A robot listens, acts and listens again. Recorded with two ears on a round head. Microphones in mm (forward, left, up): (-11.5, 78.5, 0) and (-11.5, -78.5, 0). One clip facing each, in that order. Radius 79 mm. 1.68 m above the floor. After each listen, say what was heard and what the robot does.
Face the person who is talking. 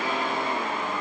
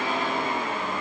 Keep listening.
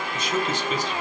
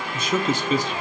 Turn 90° right.
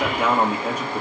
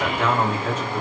So it is at 10° left. Turn 10° left.
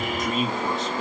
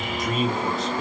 Facing the man speaking, 1 to 2 m away.